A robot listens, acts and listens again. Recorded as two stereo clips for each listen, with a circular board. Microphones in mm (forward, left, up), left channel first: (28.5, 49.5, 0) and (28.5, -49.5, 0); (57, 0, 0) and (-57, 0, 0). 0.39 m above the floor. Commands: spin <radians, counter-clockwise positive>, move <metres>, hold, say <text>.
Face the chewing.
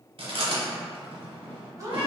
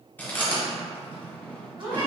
spin -1.31
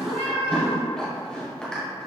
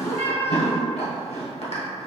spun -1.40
spin 0.17
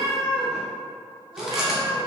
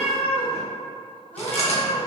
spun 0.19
say Found it: chewing, straight ahead, 1 to 2 m away.